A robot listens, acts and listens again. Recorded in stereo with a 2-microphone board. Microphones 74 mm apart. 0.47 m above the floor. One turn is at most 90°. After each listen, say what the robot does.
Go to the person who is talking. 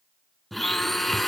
Keep listening.
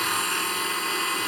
Keep listening.
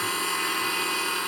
I can't make out anyone speaking, only a blender.